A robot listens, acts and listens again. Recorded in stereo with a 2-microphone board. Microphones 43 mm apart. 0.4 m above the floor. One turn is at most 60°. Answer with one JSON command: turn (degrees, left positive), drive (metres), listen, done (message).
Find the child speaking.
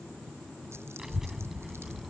{"turn": -30}
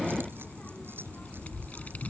{"turn": 35}
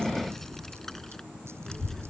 {"turn": 10}
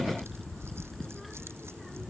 {"done": "Found it: a child speaking, straight ahead."}